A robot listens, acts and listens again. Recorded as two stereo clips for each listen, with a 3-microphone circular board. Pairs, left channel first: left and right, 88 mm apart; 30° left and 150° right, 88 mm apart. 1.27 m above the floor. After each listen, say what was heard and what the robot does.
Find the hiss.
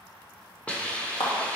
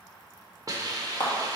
The hiss: 165° left. Turn 165° left.
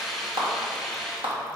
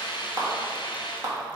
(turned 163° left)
Found it: a hiss, straight ahead.